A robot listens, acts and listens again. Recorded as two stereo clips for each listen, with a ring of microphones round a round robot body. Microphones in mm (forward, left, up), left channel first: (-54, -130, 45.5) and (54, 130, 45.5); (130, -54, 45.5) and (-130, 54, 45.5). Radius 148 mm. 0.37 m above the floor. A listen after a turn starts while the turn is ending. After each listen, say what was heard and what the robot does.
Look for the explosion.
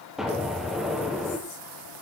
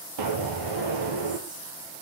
The explosion: 155° left. Turn 155° left.
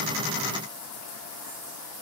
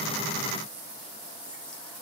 I heard an explosion from this way, but can't make it out now.